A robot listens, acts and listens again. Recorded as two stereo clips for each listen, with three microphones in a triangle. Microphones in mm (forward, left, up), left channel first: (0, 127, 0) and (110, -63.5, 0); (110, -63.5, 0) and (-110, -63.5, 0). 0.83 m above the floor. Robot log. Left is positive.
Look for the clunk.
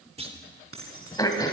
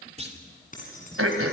note: The clunk: 120° right.
cmd yaw -120
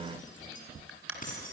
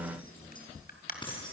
end: I heard a clunk from this way, but can't make it out now.